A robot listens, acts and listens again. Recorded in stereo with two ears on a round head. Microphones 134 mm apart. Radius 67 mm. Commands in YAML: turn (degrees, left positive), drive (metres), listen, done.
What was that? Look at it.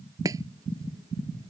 turn: -20
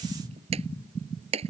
turn: -140
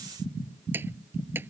turn: -15
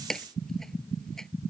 done: "Found it: chopping, straight ahead."